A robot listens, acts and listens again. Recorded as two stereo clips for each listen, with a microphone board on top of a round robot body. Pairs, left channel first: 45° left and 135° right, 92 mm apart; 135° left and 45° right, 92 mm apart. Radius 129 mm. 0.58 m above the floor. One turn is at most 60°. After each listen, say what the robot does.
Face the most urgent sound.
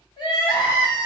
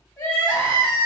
Turn 60° left.
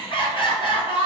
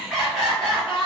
Turn 40° left.
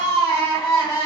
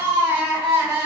Turn 10° left.
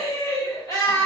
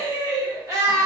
Facing the crying.